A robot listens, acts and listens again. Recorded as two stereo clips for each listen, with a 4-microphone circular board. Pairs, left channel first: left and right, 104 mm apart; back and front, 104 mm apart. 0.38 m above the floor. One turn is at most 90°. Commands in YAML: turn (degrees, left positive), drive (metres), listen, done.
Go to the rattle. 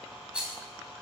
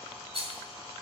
turn: -10
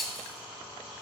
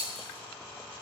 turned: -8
drive: 1.0
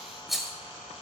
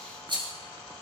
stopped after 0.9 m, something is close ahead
done: "I am next to the rattle."